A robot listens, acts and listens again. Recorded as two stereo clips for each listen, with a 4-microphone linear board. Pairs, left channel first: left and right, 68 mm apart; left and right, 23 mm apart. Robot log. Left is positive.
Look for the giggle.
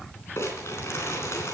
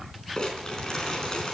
cmd idle
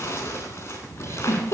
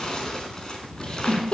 note: The giggle: about 40° left or 140° left.
cmd yaw +40
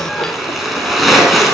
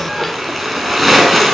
cmd idle
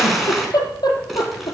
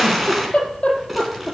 note: So it is at 95° left.
cmd yaw +95
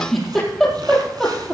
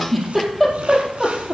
end: Found it: a giggle, straight ahead, over 4 m away.